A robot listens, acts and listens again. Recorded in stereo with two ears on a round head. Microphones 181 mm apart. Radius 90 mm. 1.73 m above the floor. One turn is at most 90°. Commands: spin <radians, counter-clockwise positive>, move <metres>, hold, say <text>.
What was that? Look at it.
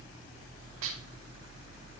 spin -1.31
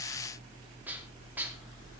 spin -0.17
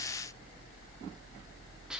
hold
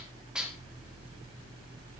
say Found it: dishes clattering, straight ahead.